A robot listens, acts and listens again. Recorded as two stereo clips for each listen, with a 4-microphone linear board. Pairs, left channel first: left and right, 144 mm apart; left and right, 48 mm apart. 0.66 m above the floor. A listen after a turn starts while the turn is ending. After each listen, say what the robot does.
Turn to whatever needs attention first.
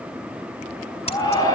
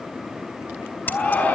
Turn 25° left.
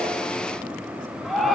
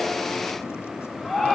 Facing the shout.